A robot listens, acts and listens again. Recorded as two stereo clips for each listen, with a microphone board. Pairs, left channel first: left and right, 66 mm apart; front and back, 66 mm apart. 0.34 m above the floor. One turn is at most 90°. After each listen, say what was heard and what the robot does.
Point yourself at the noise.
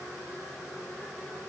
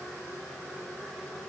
Keep listening.
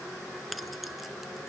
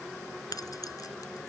Facing the keys jangling.